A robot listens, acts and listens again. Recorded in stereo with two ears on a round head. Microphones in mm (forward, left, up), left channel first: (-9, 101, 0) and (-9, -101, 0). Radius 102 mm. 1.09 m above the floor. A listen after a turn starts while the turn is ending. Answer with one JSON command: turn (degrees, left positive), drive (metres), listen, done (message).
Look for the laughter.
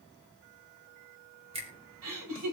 {"turn": -90}
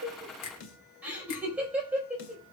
{"done": "Found it: laughter, straight ahead."}